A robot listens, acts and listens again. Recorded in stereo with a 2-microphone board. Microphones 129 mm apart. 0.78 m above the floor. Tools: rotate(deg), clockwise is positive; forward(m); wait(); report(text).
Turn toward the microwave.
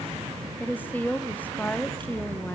wait()
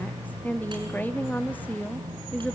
wait()
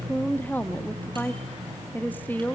report("I can't make out a microwave to turn to.")